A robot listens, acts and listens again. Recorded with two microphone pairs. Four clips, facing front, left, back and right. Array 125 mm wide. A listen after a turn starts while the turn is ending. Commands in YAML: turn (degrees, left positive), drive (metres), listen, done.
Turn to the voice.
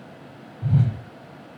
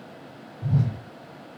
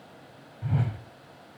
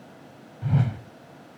listen: true
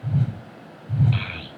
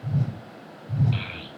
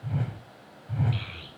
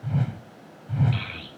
done: "Found it: a child speaking, straight ahead."